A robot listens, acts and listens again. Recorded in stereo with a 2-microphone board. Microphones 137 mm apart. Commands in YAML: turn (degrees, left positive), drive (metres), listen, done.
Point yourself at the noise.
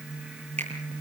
turn: -55
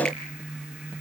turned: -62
listen: true
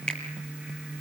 done: "Found it: a finger snap, straight ahead, over 4 m away."